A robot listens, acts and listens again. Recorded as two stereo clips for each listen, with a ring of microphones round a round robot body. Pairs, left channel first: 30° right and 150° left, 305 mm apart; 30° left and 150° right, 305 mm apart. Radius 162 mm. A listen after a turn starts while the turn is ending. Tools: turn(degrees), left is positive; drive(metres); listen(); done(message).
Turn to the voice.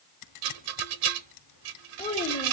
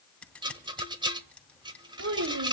turn(degrees=-100)
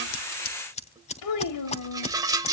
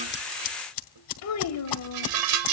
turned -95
done("Found it: a child speaking, straight ahead, 2 to 4 m away.")